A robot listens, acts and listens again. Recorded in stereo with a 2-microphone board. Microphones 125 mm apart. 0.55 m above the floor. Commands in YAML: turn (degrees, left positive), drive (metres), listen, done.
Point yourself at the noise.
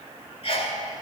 turn: 50
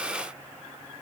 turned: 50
listen: true
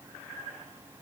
done: "I heard a sneeze, but can't make it out now. It was about straight ahead or 80° left."